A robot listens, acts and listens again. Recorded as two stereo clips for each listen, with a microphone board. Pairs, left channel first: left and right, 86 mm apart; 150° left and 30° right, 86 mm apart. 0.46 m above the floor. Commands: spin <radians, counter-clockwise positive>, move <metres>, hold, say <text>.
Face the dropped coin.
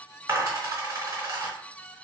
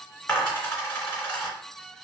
spin -2.44
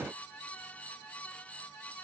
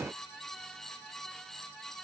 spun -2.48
say Facing where the dropped coin came from. I can't hear it now.